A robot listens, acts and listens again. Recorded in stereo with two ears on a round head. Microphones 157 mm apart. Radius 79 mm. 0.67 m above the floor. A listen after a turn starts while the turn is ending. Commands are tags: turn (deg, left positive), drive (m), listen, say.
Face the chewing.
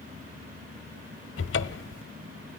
<listen/>
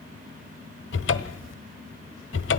<listen/>
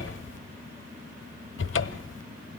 <say>I can't make out chewing, only a cupboard door.</say>